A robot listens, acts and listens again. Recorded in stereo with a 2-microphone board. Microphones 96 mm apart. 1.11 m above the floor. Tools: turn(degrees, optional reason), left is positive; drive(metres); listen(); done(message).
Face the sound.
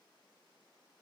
listen()
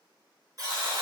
turn(degrees=-45, reason="The buzzer: about 45° right or 135° right.")
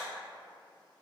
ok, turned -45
listen()
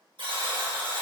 turn(degrees=-90, reason="So it is at 90° right.")
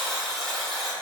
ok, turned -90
done("Found it: a buzzer, straight ahead.")